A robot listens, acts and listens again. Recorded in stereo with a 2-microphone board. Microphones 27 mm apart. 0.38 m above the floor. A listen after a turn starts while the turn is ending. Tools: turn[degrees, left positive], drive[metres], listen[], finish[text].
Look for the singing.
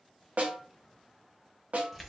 Action: listen[]
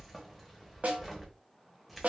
Action: listen[]
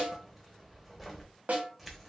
Action: finish[I can't make out singing, only keys jangling and a snare drum.]